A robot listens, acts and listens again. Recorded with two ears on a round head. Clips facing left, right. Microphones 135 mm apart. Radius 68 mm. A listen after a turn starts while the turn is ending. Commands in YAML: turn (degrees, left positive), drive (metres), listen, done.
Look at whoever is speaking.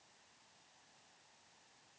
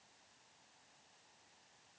listen: true
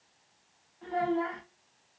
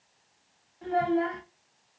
turn: -25
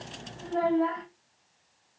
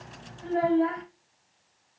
done: "Found it: a child speaking, straight ahead."